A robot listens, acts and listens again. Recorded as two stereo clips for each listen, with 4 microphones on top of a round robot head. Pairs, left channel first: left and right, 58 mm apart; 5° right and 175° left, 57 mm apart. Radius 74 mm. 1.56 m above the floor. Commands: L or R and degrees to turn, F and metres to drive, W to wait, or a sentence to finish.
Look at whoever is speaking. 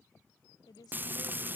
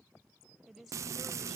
L90
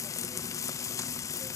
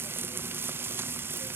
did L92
W
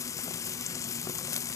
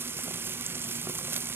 W
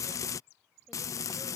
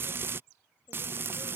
Facing where the woman speaking came from. I can't hear it now.